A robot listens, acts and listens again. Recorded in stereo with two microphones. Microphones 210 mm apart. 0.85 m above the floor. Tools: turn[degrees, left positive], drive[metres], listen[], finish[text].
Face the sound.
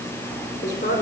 Thought: The woman speaking: about 55° left or 125° left.
Action: turn[55]
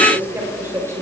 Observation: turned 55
Thought: So it is at 15° right.
Action: turn[-15]
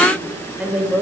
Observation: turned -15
Thought: The woman speaking is now 10° right.
Action: turn[-10]
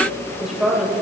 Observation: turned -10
Action: finish[Facing the woman speaking, over 4 m away.]